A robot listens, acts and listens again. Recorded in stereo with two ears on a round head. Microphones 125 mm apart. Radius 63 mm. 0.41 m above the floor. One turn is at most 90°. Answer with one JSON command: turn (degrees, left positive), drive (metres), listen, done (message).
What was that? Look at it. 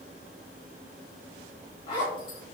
{"turn": 35}
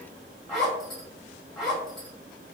{"done": "Found it: a zipper, straight ahead, 1 to 2 m away."}